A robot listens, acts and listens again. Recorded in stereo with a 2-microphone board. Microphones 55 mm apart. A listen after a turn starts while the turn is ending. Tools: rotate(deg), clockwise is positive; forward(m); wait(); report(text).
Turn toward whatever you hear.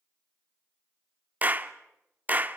rotate(35)
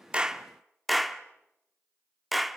report("Facing the clap.")